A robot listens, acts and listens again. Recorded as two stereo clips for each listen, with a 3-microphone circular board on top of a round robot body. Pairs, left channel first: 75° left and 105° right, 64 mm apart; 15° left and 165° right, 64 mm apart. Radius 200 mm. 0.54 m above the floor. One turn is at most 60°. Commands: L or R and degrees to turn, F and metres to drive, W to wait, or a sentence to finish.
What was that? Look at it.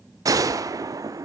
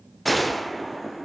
R60
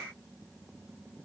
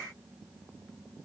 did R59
R15
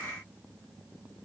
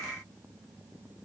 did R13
Facing where the gunshot came from. I can't hear it now.